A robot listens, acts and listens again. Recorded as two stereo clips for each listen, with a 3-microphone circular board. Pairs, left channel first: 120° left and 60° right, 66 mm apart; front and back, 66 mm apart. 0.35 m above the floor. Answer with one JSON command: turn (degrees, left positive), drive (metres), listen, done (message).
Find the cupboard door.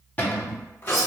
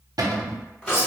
{"turn": 180}
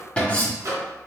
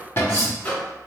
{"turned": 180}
{"turn": 50}
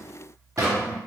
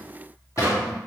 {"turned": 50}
{"turn": -30}
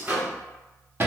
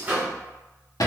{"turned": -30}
{"turn": -10}
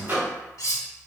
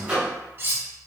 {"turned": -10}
{"listen": true}
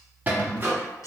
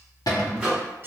{"done": "Facing the cupboard door, under 1 m away."}